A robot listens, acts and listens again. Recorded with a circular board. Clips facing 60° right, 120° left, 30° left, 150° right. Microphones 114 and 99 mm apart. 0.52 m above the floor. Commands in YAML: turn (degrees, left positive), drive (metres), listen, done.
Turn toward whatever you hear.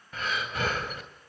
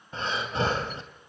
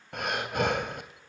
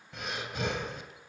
turn: 60
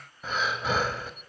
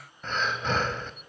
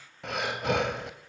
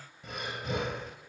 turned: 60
turn: 25
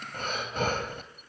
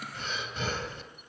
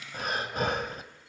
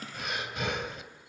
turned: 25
turn: -20
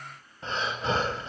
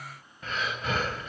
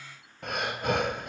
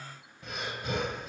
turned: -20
done: "Found it: breathing, straight ahead, 2 to 4 m away."